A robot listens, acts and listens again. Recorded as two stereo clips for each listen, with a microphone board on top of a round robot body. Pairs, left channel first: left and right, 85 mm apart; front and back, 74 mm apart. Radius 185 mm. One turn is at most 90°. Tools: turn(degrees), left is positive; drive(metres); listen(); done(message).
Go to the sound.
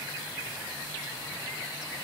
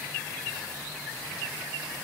listen()
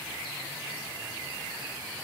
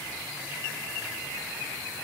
listen()
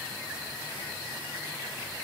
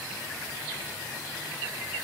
done("I can't make out anything to turn to.")